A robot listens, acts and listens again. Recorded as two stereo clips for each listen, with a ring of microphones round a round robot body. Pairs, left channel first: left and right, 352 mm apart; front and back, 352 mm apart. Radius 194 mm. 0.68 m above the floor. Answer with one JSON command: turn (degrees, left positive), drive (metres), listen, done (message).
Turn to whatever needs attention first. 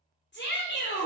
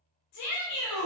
{"turn": 35}
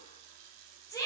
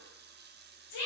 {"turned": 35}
{"turn": 10}
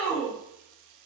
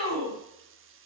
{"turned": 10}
{"done": "Facing the shout, 2 to 4 m away."}